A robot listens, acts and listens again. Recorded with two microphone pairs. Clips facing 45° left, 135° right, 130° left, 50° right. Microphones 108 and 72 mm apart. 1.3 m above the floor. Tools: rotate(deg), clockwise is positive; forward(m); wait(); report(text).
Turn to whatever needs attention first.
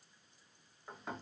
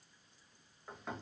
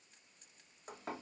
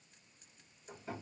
wait()
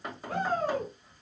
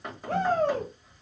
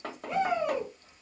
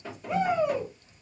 rotate(130)
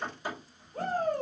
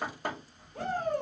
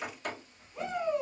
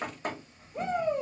rotate(10)
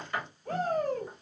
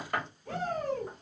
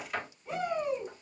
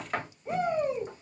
report("Found it: a shout, straight ahead.")